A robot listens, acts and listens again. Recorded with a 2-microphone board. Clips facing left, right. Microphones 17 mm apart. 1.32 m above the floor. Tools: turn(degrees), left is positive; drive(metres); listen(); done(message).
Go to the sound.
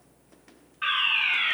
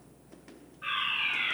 turn(degrees=65)
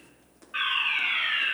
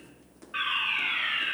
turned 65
drive(metres=1.0)
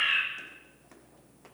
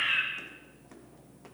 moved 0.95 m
drive(metres=1.0)
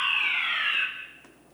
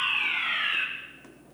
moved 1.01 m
drive(metres=1.0)
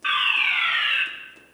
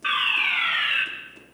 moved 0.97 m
drive(metres=1.0)
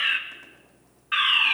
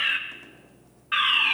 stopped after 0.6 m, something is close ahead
done("Arrived at the fire alarm, straight ahead.")